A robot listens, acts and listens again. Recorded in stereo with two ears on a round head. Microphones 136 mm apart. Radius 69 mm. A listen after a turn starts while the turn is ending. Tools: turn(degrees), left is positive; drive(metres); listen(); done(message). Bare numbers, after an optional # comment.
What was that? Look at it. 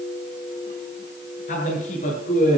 # The man speaking: about 50° left or 130° left.
turn(50)
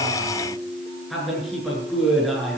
done("Facing the man speaking, over 4 m away.")